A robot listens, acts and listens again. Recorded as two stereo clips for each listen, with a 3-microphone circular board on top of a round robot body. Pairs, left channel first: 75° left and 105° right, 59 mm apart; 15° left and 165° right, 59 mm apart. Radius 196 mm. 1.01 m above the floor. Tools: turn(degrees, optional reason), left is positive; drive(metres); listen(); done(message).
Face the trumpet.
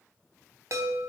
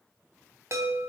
listen()
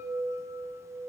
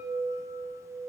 listen()
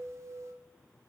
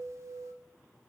done("I can't make out a trumpet, only a chime.")